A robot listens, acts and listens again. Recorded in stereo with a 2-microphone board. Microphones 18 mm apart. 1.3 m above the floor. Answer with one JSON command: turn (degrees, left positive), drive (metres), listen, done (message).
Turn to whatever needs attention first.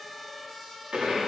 {"listen": true}
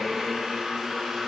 {"listen": true}
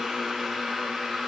{"done": "I can't make out anything urgent to turn to."}